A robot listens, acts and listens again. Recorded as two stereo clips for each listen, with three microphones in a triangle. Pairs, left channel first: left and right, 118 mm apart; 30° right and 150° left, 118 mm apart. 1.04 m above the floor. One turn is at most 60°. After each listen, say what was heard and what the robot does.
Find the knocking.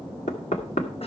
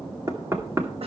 The knocking: 85° left. Turn 60° left.
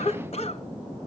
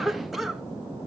Nothing new. It was at 25° left. Turn 25° left.
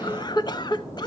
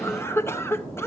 Keep listening.
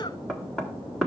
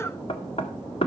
Facing the knocking.